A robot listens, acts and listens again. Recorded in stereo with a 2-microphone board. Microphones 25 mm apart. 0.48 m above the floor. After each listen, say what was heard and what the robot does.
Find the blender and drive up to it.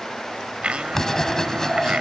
The blender: about 50° right or 130° right. Turn 50° right.
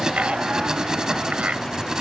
Keep listening.
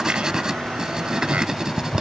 Keep listening.
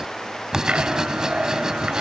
I heard a blender, but can't make it out now. It was about straight ahead or 80° right. I did not reach it.